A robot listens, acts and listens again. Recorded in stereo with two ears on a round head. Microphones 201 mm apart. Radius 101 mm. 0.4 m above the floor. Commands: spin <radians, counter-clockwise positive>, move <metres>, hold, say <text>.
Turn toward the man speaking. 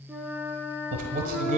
spin -0.61
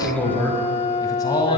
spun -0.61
spin 0.35
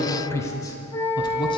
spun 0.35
spin 0.35
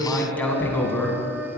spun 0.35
spin 0.17
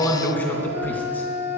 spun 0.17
spin 0.17
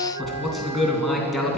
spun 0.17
say Found it: a man speaking, straight ahead, 2 to 4 m away.